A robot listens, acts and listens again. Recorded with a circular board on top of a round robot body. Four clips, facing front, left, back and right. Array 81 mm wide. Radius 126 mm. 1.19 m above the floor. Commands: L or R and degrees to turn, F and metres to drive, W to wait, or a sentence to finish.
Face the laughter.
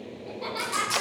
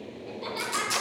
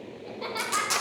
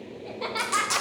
R105
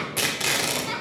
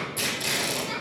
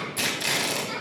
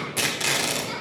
Facing the laughter.